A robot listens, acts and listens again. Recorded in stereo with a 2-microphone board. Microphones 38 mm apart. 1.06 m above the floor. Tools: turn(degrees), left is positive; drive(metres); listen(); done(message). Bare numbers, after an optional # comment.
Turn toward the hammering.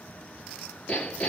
# The hammering: about 40° left or 140° left.
turn(40)
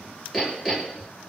done("Found it: hammering, straight ahead.")